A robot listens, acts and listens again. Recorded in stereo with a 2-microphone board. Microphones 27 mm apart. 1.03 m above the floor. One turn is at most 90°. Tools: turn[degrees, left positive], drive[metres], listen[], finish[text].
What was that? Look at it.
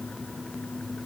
Action: listen[]
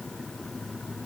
Action: listen[]
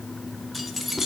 Action: turn[-30]
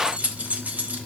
Thought: So it is at 110° right.
Action: turn[-90]
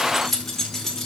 Thought: The keys jangling is now 15° left.
Action: turn[15]
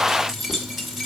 Action: finish[Facing the keys jangling.]